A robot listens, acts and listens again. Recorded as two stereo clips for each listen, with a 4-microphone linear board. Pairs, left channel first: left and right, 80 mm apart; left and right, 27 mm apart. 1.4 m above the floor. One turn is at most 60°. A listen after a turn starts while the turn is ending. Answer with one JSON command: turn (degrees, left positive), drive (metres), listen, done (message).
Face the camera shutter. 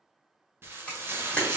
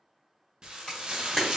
{"turn": 15}
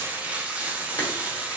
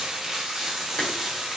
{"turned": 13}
{"listen": true}
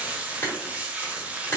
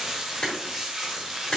{"turn": 60}
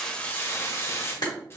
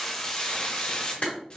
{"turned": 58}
{"turn": 60}
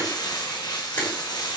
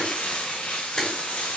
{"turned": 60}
{"turn": 30}
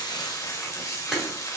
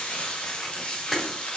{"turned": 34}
{"done": "Facing the camera shutter, 1 to 2 m away."}